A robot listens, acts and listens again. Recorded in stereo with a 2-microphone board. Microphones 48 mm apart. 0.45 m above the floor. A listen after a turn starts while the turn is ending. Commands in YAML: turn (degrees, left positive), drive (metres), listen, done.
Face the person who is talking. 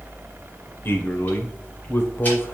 turn: 50
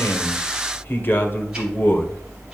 turn: 60
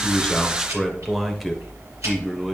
done: "Found it: a man speaking, straight ahead, 1 to 2 m away."